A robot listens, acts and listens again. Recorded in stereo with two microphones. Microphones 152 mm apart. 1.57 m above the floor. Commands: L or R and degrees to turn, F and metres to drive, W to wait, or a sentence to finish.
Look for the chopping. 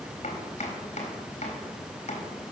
L45
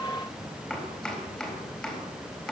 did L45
Found it: chopping, straight ahead.